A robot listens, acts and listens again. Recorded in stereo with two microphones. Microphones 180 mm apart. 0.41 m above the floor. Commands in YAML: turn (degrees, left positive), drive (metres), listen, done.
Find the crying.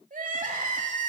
turn: -45
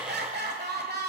turn: -85
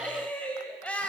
turn: 10
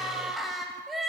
done: "Found it: crying, straight ahead."